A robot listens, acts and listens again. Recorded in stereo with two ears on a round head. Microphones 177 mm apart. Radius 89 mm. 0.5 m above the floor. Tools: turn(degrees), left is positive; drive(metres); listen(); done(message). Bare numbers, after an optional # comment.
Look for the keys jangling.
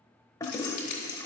# The keys jangling: about 45° left or 135° left.
turn(45)
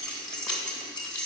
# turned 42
done("Found it: keys jangling, straight ahead.")